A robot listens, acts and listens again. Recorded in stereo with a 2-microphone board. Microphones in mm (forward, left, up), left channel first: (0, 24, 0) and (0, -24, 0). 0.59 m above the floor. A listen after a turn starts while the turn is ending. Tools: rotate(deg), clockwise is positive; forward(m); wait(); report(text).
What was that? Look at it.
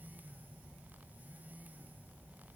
wait()
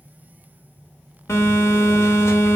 rotate(-90)
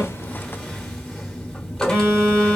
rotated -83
rotate(-10)
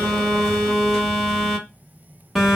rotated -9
report("Found it: a phone buzzing, straight ahead.")